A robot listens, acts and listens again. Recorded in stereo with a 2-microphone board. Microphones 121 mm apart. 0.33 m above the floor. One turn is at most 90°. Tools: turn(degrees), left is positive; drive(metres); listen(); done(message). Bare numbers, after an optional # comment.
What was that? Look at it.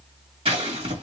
# The scissors: about 50° right or 130° right.
turn(-50)
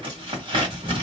# So it is at 60° right.
turn(-60)
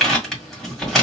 done("Found it: scissors, straight ahead, 1 to 2 m away.")